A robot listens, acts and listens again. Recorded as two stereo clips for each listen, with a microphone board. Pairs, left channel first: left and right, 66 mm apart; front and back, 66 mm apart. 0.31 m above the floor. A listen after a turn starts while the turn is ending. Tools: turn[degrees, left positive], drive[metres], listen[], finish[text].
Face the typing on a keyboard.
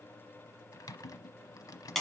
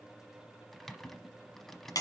Thought: The typing on a keyboard: 85° left.
Action: turn[85]
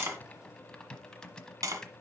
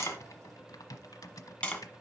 Thought: The typing on a keyboard is now 10° left.
Action: turn[10]
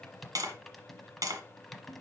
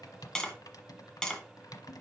Action: finish[Found it: typing on a keyboard, straight ahead, under 1 m away.]